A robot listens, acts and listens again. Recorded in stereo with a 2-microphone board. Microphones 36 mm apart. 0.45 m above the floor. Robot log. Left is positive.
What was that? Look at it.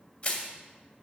note: The crushing: about 45° left or 135° left.
cmd yaw +45
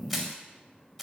end: Found it: crushing, straight ahead.